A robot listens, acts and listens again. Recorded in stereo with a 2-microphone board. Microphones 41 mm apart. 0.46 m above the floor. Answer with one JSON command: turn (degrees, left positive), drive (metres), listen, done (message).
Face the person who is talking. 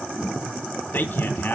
{"turn": 55}
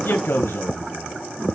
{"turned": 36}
{"turn": 85}
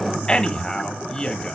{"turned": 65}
{"turn": 20}
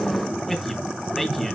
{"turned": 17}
{"done": "Found it: a man speaking, straight ahead."}